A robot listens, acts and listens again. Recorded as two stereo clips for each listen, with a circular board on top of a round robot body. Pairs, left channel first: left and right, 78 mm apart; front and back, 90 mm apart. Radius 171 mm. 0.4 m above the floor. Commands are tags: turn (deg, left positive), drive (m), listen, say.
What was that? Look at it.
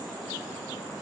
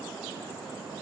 <listen/>
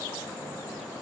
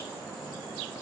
<listen/>
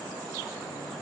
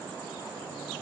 <say>I can't make out anything.</say>